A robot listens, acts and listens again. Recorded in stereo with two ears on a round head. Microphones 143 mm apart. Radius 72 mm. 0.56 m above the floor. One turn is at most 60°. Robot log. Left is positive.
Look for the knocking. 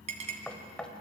cmd yaw +30
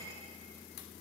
cmd idle
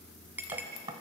note: So it is at 25° right.
cmd yaw -25
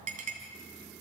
cmd idle
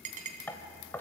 note: The knocking is now 15° left.
cmd yaw +15
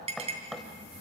end: Facing the knocking, 1 to 2 m away.